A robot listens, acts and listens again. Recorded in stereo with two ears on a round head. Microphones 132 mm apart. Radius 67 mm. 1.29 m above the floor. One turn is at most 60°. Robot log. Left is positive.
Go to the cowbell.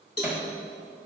note: The cowbell: about 20° left or 160° left.
cmd yaw +20
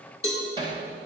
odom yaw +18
cmd fwd 1.0
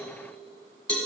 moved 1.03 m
cmd fwd 1.0
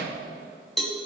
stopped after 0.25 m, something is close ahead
end: I am next to the cowbell.